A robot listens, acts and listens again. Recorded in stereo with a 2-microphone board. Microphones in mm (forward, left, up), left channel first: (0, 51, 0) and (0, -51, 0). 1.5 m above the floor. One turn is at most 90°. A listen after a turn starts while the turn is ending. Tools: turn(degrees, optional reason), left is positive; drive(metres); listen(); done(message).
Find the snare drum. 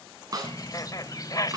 turn(degrees=-35, reason="The snare drum: about 35° right or 145° right.")
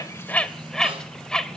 listen()
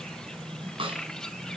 turn(degrees=-90, reason="So it is at 105° right.")
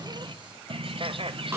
turn(degrees=-30, reason="The snare drum is now 30° right.")
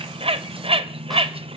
listen()
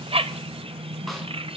listen()
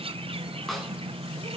done("Facing where the snare drum came from. I can't hear it now.")